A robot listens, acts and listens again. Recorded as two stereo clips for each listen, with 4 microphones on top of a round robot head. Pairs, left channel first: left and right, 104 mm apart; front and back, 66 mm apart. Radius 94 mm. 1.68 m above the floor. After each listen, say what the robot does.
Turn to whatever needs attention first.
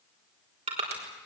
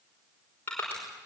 Keep listening.
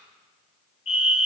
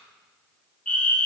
Turn 75° left.
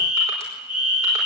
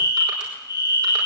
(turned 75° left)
Turn 10° right.
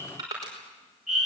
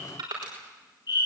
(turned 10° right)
Found it: a fire alarm, straight ahead.